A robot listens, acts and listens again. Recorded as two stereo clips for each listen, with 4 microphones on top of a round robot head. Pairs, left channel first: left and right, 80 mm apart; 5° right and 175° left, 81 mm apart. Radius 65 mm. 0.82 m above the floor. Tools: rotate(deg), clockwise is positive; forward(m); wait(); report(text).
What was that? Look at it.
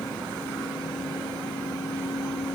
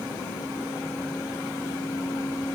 wait()
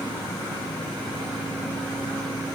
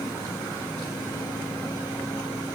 wait()
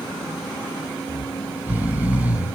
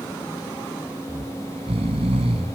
rotate(160)
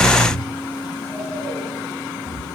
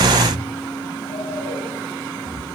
rotate(-10)
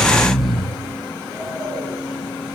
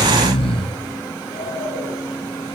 report("Found it: snoring, straight ahead, 2 to 4 m away.")